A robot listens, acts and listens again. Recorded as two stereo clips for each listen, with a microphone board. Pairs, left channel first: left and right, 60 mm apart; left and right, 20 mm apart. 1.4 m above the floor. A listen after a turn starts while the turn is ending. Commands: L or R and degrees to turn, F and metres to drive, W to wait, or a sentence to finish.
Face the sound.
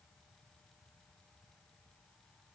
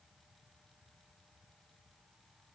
W
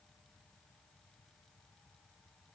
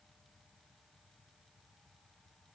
W
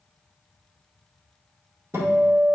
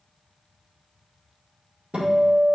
R50
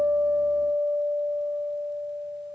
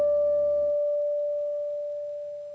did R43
R10
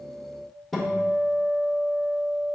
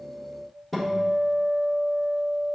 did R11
Found it: a guitar, straight ahead.